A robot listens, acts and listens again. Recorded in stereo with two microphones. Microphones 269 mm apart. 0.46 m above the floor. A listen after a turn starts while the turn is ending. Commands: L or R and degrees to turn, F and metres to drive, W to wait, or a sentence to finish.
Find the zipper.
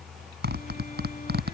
R40
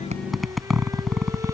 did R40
Facing the zipper.